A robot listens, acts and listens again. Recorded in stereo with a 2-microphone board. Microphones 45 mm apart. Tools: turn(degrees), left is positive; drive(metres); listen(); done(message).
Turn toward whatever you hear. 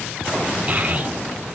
turn(degrees=-30)
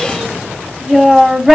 done("Facing the child speaking, 2 to 4 m away.")